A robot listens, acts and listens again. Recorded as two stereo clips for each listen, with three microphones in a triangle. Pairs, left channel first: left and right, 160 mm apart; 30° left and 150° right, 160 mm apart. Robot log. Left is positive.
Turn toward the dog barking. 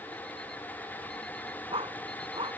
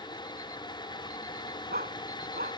note: The dog barking: 145° right.
cmd yaw -145
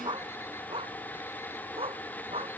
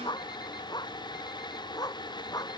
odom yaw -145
note: The dog barking is now 35° right.
cmd yaw -35
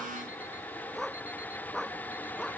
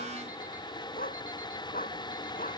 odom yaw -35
end: Found it: a dog barking, straight ahead.